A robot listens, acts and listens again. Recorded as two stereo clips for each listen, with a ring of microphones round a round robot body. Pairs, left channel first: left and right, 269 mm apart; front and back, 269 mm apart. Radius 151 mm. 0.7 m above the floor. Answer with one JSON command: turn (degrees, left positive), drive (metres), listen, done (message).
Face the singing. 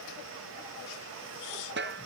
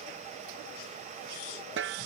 {"listen": true}
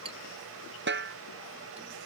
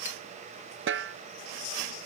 {"listen": true}
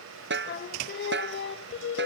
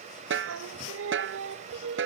{"turn": 130}
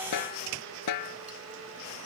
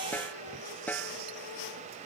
{"listen": true}
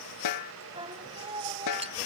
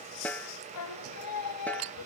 {"turn": -15}
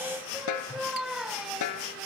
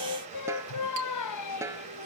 {"done": "Facing the singing."}